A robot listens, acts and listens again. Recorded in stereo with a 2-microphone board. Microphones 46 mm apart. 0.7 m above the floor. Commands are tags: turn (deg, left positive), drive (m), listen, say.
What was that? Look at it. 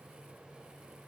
<listen/>
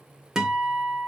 <turn deg="-30"/>
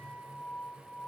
<turn deg="-135"/>
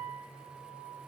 <turn deg="-10"/>
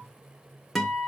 <say>Facing the guitar, 1 to 2 m away.</say>